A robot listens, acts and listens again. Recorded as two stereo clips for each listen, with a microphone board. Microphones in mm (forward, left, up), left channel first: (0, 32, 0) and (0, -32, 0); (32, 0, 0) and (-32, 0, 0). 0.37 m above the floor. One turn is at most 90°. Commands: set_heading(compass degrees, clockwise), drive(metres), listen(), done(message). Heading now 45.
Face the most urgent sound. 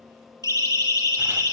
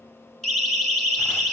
set_heading(320)
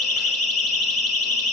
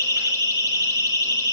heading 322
done("Found it: a siren, straight ahead, over 4 m away.")